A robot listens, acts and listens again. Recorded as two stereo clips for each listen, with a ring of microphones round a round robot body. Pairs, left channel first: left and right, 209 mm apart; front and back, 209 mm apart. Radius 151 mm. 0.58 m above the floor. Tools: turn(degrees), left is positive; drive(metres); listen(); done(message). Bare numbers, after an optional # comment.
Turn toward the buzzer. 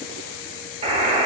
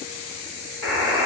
# The buzzer: 30° right.
turn(-30)
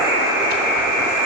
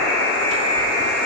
# The buzzer is now 10° right.
turn(-10)
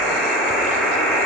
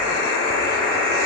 done("Found it: a buzzer, straight ahead.")